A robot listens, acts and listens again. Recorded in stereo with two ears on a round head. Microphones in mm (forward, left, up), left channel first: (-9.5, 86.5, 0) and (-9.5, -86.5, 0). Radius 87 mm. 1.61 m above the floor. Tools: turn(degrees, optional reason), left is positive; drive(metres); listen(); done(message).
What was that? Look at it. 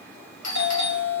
turn(degrees=70, reason="The doorbell: about 70° left or 110° left.")
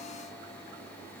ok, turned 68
listen()
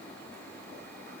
listen()
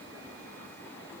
turn(degrees=15, reason="So it is at 15° left.")
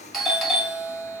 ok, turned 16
done("Facing the doorbell.")